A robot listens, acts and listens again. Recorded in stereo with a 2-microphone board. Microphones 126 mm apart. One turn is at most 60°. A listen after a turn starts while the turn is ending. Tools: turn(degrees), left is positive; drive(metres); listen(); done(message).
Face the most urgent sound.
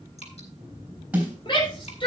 turn(degrees=40)
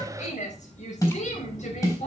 turn(degrees=60)
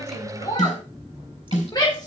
turn(degrees=35)
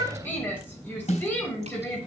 turn(degrees=15)
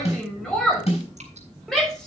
done("Found it: a shout, straight ahead, over 4 m away.")